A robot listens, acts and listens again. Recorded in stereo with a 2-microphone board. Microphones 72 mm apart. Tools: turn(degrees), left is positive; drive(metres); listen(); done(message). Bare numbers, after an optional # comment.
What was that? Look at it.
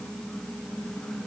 listen()
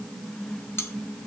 # The cutlery clinking: about 35° left or 145° left.
turn(35)
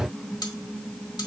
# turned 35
# So it is at 110° left.
turn(110)
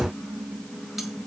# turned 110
listen()
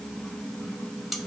done("Found it: cutlery clinking, straight ahead.")